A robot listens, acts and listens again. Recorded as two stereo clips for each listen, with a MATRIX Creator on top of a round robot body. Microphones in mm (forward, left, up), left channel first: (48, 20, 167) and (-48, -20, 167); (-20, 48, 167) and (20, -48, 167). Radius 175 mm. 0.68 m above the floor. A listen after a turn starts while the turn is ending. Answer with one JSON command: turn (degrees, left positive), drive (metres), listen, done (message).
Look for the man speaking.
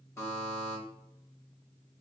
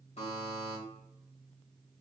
{"listen": true}
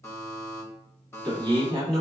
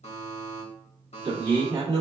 {"turn": -110}
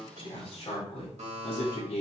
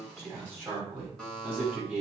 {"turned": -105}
{"turn": 10}
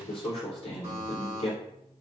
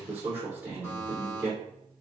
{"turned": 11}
{"done": "Facing the man speaking, 2 to 4 m away."}